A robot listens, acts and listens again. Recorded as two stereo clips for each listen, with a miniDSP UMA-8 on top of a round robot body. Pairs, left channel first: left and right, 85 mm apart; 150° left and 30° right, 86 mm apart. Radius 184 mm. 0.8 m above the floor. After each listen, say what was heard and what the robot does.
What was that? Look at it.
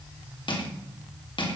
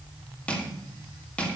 The crushing: 75° left. Turn 75° left.
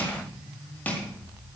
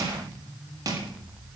The crushing is now 20° left. Turn 20° left.
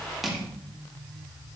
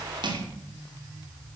Found it: crushing, straight ahead.